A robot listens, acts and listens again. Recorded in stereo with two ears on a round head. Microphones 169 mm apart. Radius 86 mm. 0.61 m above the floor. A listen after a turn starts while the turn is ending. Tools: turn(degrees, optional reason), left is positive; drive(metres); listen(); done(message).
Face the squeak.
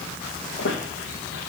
turn(degrees=65, reason="The squeak: about 65° left or 115° left.")
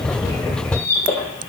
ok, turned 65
turn(degrees=10, reason="So it is at 10° left.")
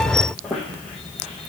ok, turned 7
done("Found it: a squeak, straight ahead.")